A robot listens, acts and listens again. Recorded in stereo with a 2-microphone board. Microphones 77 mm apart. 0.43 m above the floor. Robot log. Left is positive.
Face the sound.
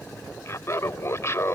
note: The laughter: about 40° left or 140° left.
cmd yaw +40
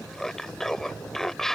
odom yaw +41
end: Facing the laughter.